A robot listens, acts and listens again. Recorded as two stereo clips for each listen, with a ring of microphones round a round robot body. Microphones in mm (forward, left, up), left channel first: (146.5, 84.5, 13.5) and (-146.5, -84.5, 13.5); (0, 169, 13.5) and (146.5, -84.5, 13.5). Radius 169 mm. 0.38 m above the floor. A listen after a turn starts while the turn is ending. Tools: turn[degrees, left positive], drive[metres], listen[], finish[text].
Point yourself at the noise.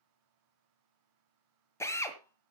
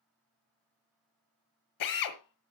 Thought: The drill: 110° left.
Action: turn[110]
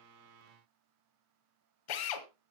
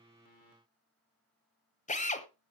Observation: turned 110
Thought: The drill is now 55° left.
Action: turn[55]
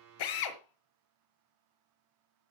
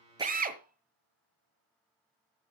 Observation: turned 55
Action: finish[Found it: a drill, straight ahead, 1 to 2 m away.]